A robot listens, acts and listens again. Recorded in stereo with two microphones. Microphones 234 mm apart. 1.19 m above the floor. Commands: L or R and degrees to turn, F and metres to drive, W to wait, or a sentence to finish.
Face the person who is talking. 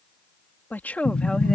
L30
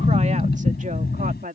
R35
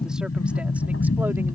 W
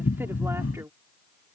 R10
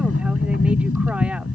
W
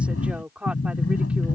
Found it: a woman speaking, straight ahead.